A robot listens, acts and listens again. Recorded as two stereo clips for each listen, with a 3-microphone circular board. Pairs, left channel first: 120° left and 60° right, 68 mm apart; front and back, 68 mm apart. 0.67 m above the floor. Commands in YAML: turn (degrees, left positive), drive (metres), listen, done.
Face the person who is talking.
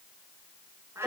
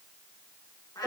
listen: true
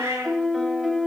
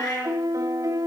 listen: true
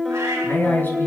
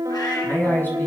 turn: 60
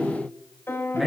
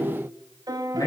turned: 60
turn: 30
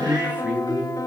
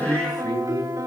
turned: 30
turn: 10
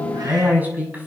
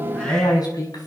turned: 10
done: "Found it: a man speaking, straight ahead."